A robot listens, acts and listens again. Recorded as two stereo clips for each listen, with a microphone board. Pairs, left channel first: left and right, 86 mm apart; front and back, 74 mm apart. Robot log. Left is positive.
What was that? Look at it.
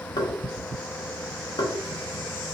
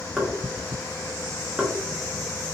note: The knocking: 95° left.
cmd yaw +95
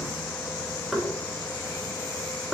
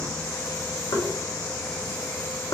end: Facing the knocking.